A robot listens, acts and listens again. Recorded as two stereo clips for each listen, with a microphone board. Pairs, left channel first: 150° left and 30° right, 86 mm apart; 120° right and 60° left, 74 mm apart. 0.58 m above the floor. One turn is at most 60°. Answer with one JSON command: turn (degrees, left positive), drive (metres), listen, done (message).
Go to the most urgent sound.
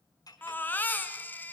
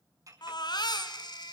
{"turn": -60}
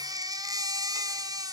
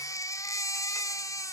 {"turn": -60}
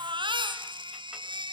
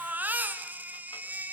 {"drive": 1.0}
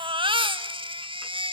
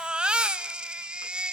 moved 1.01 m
{"turn": -15}
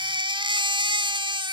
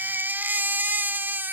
{"drive": 1.0}
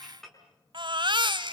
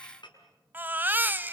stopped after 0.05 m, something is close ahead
{"done": "I am next to the baby crying."}